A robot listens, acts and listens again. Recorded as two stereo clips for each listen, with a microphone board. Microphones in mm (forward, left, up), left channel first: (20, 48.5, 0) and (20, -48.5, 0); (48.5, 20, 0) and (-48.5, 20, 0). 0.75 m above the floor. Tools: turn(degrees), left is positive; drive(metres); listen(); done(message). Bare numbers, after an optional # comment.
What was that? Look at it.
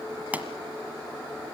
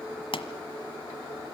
# The pop: 15° right.
turn(-15)
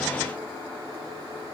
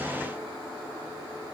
done("Facing where the pop came from. I can't hear it now.")